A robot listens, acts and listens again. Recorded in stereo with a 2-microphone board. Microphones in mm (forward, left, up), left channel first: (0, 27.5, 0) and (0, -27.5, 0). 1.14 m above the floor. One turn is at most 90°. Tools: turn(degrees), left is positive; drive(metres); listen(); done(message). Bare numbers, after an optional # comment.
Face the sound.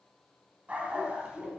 # The dog barking: about 15° right or 165° right.
turn(-15)
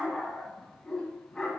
# So it is at 10° left.
turn(10)
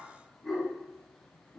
# The dog barking is now 10° left.
turn(10)
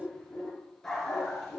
done("Found it: a dog barking, straight ahead, over 4 m away.")